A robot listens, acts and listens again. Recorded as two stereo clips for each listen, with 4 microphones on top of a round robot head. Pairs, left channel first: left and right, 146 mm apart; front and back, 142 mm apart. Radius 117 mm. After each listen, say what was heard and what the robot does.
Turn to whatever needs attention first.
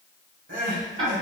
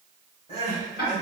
The crying: 70° right. Turn 70° right.
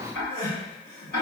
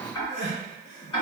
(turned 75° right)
Found it: crying, straight ahead.